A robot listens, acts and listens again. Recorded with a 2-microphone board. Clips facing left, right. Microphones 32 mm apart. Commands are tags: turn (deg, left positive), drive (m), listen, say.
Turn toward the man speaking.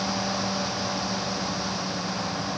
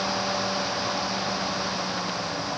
<listen/>
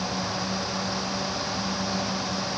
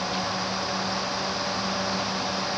<listen/>
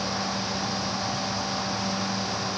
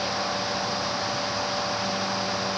<say>I can't make out a man speaking.</say>